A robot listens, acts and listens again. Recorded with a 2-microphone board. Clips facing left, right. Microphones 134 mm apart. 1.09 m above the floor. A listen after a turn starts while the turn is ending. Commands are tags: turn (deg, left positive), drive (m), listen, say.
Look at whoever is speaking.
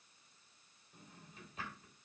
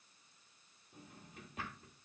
<listen/>
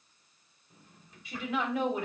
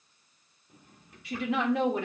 <turn deg="-70"/>
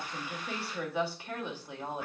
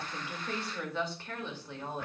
<turn deg="15"/>
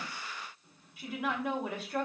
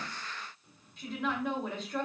<say>Found it: a woman speaking, straight ahead.</say>